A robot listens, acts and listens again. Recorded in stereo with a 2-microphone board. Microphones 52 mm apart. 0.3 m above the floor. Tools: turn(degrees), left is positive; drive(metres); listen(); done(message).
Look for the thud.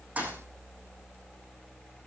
turn(degrees=-30)
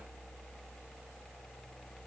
listen()
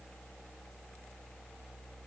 done("I heard a thud, but can't make it out now. It was about straight ahead or 120° right.")